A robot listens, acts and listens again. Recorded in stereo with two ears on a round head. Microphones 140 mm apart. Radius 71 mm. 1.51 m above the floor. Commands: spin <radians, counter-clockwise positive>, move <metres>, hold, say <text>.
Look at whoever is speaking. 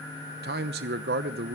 spin -1.13
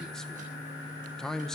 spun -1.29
say Found it: a man speaking, straight ahead.